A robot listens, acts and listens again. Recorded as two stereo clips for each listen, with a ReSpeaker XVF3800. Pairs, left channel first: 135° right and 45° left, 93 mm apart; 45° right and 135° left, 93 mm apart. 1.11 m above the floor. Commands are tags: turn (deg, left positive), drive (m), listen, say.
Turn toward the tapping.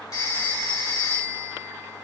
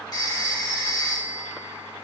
<listen/>
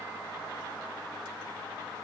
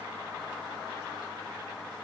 <listen/>
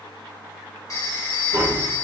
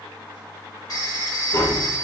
<turn deg="-10"/>
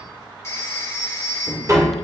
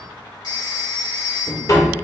<say>Facing the tapping, 1 to 2 m away.</say>